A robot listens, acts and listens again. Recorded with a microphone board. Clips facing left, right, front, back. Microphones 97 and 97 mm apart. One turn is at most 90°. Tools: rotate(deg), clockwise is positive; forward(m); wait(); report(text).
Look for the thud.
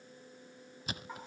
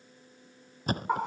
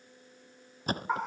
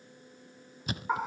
rotate(45)
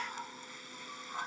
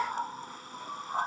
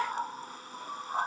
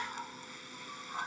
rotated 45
report("I heard a thud from this way, but can't make it out now.")